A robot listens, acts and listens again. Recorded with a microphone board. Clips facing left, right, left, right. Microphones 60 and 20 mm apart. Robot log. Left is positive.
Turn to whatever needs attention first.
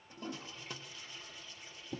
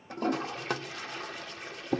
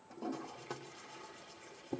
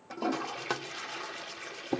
cmd idle
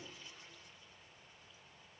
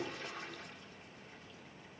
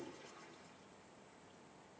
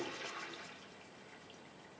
cmd idle
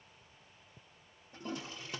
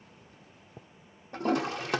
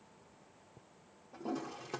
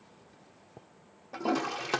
end: I can't make out anything urgent, only a toilet flushing.